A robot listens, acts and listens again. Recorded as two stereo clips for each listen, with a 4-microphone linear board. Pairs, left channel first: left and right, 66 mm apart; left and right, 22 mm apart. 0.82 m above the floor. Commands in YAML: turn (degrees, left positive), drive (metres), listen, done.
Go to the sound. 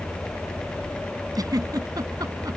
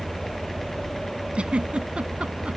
turn: -70
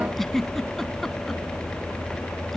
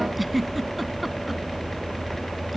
drive: 1.0
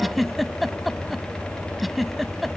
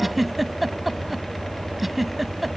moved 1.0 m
drive: 1.0
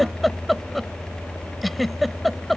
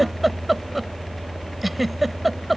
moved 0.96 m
drive: 1.0
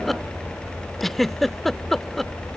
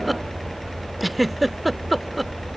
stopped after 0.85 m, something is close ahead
done: "I am next to the giggle."